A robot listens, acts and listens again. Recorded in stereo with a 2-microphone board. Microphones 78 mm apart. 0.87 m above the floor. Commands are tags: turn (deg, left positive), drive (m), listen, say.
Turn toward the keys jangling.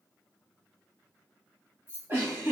<turn deg="-30"/>
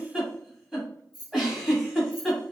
<turn deg="-120"/>
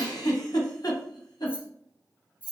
<turn deg="-20"/>
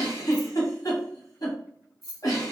<say>Found it: keys jangling, straight ahead, 1 to 2 m away.</say>